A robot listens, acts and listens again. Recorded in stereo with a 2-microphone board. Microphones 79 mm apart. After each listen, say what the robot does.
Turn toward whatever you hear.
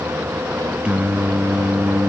Turn 30° right.
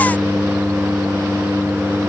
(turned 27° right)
Turn 20° left.
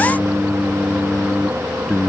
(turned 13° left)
Turn 10° left.
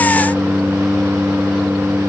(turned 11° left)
Found it: singing, straight ahead.